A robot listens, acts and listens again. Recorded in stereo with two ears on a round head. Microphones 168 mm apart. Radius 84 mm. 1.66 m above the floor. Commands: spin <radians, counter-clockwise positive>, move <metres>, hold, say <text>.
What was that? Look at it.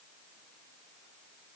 hold
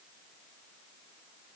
hold
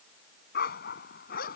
spin 0.87
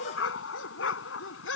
spin 1.31
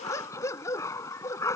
spin 0.26
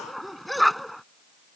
say Facing the dog barking.